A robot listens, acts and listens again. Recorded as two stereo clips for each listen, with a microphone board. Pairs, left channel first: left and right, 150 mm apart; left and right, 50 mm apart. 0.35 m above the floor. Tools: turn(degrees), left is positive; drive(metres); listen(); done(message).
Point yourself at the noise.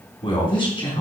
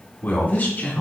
turn(degrees=35)
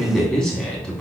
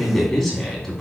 done("Facing the man speaking.")